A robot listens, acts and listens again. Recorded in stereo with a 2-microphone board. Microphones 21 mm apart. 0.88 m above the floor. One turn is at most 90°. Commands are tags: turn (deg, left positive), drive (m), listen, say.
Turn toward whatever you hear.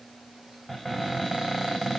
<turn deg="-15"/>
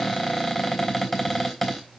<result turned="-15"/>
<say>Facing the cupboard door, 2 to 4 m away.</say>